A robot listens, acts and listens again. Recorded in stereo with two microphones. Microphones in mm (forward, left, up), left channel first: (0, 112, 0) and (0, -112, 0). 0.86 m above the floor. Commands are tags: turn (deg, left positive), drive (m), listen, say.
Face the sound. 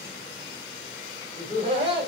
<turn deg="-25"/>
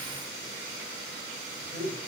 <turn deg="-40"/>
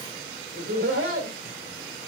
<turn deg="-110"/>
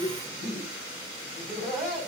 <say>Found it: laughter, straight ahead.</say>